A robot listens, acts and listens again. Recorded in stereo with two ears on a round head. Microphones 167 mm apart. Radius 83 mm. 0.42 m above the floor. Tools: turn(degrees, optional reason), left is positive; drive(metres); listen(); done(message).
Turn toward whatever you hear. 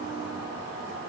listen()
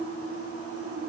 listen()
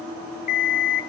turn(degrees=45, reason="The alarm clock: about 45° left or 135° left.")
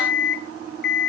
turn(degrees=80, reason="So it is at 80° left.")
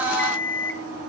turn(degrees=15, reason="The alarm clock is now 15° left.")
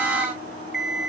done("Facing the alarm clock, 1 to 2 m away.")